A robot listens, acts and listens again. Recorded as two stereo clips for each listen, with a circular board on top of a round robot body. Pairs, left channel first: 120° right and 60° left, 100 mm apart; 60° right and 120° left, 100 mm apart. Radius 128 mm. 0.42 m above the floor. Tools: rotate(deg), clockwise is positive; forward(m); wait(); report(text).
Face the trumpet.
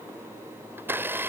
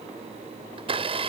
wait()
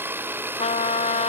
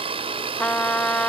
rotate(140)
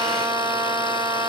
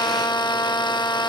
report("Found it: a trumpet, straight ahead.")